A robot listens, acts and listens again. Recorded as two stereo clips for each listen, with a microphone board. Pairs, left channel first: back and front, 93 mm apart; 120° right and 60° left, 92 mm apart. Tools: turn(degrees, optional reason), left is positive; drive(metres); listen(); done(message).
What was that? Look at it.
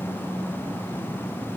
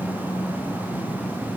listen()
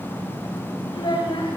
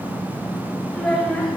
turn(degrees=155, reason="The child speaking: 155° left.")
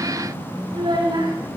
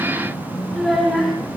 turn(degrees=-30, reason="The child speaking is now 30° right.")
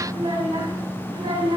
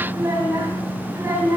done("Facing the child speaking.")